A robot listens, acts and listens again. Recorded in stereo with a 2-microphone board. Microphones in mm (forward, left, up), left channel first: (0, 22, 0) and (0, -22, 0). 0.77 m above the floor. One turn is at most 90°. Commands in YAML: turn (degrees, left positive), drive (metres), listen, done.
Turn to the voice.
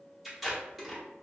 listen: true
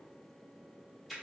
listen: true
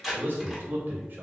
turn: -50
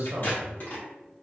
turn: -65
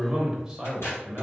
turn: -15
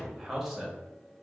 done: "Found it: a man speaking, straight ahead."